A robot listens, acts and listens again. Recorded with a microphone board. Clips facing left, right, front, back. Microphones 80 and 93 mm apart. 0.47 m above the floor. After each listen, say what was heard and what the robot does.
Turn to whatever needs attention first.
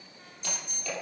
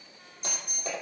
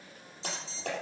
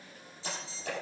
The alarm: 60° right. Turn 60° right.
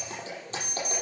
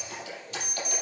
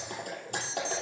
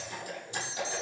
Facing the alarm.